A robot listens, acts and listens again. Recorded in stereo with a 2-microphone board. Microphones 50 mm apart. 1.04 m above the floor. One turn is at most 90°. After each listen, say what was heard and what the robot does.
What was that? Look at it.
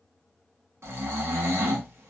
The snoring: about 65° right or 115° right. Turn 65° right.
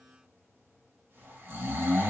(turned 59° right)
So it is at 50° right. Turn 50° right.
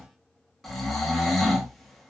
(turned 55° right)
Facing the snoring.